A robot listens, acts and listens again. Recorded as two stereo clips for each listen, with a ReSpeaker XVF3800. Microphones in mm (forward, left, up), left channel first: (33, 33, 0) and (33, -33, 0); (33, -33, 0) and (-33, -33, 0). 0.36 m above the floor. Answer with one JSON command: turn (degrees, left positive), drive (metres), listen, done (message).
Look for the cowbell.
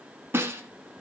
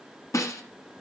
{"listen": true}
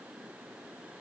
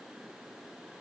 {"listen": true}
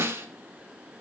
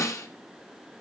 {"done": "I can't make out a cowbell, only a snare drum."}